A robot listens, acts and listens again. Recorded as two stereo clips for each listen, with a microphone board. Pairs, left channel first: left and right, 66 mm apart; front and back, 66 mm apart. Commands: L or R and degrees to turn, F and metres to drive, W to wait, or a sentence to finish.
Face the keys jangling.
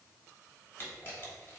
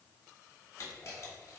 W
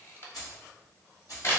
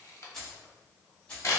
L70
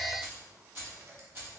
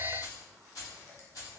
R35
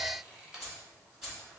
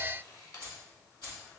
Facing the keys jangling, 2 to 4 m away.